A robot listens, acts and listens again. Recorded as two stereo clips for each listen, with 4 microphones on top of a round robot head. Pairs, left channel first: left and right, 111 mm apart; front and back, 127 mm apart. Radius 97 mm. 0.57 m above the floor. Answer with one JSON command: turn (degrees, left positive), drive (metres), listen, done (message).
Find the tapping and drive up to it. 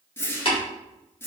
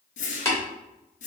{"turn": 65}
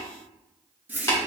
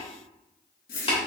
{"turn": 30}
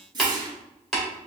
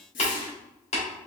{"drive": 1.0}
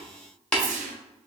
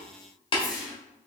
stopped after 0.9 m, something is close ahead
{"turn": 10}
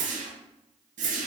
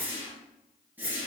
{"listen": true}
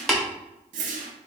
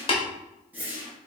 {"done": "I am next to the tapping."}